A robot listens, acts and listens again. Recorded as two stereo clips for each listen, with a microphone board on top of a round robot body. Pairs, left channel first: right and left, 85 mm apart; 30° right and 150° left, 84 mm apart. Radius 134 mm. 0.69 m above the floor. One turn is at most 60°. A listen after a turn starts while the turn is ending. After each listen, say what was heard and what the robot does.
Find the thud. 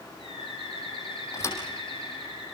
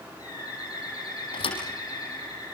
The thud: 30° right. Turn 30° right.
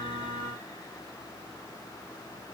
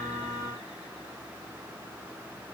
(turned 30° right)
Facing where the thud came from. I can't hear it now.